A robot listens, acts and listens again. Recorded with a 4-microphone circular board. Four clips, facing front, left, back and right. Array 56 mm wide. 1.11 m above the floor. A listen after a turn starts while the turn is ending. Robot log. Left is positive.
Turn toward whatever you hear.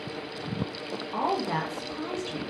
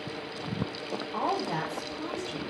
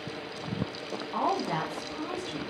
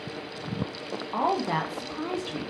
note: The woman speaking: 70° right.
cmd yaw -70
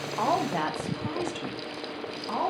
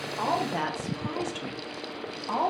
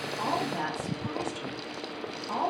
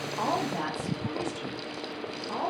note: The woman speaking is now 60° left.
cmd yaw +60
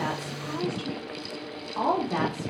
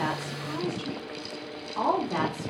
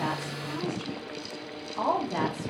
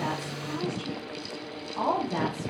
note: The woman speaking is now 20° left.
cmd yaw +20
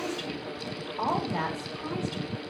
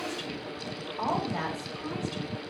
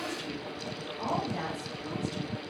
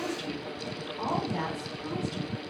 end: Facing the woman speaking.